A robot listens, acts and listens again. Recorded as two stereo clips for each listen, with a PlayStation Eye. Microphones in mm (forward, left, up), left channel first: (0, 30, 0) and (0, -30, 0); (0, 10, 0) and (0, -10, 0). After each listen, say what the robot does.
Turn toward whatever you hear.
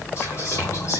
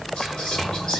Turn 55° left.
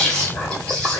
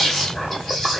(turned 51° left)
Turn 20° left.
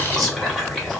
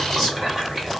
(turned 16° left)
Facing the whispering, 1 to 2 m away.